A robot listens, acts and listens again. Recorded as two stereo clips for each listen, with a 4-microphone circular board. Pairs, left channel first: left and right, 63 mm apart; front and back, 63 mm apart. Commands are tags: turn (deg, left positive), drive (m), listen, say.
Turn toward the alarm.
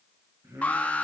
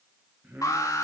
<turn deg="25"/>
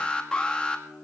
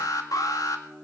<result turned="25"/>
<turn deg="15"/>
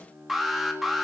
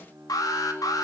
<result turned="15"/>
<say>Facing the alarm.</say>